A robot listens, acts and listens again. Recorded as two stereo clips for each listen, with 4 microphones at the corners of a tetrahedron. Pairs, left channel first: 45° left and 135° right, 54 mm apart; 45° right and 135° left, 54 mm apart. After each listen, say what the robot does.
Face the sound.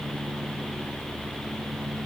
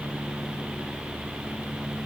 Keep listening.
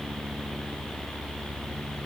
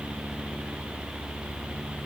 Keep listening.
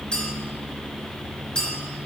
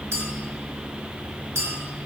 Turn 115° left.
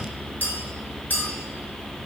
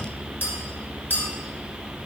Facing the clink.